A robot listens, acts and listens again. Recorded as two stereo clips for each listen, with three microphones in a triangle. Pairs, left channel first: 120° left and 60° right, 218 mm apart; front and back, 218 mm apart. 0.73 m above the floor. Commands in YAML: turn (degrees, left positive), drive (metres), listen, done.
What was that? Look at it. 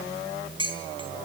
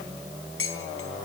done: "Found it: dishes clattering, straight ahead."